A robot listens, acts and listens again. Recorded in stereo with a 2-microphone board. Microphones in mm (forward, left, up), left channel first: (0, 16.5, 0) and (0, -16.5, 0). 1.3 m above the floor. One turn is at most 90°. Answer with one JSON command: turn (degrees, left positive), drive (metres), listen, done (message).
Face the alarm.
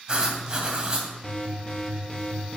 {"turn": 30}
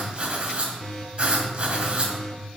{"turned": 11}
{"turn": 20}
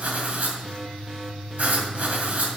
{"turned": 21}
{"done": "Facing the alarm."}